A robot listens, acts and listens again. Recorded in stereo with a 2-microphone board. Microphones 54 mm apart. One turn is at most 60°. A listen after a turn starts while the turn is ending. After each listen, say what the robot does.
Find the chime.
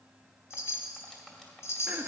Turn 55° left.
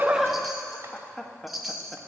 Facing the chime, 1 to 2 m away.